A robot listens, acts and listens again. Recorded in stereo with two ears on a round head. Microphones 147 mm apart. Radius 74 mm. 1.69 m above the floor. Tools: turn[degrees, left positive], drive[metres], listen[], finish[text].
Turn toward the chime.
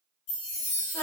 Action: turn[90]
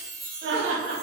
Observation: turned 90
Action: finish[Facing the chime.]